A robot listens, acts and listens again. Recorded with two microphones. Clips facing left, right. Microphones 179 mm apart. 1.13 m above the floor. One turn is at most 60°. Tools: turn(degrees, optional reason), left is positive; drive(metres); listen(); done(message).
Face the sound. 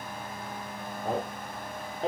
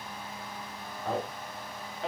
turn(degrees=35, reason="The man speaking: about 35° left or 145° left.")
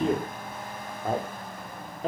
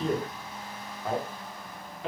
turn(degrees=40, reason="The man speaking: about 40° left or 140° left.")
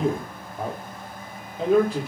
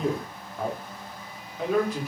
turn(degrees=30, reason="The man speaking: about 30° left or 150° left.")
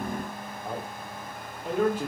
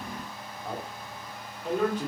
turn(degrees=10, reason="So it is at 10° left.")
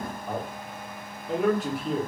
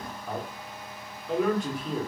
done("Facing the man speaking.")